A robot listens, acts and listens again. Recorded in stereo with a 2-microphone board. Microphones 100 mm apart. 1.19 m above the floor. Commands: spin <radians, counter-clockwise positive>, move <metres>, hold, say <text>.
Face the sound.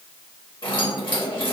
spin 0.87
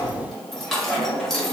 say Facing the keys jangling.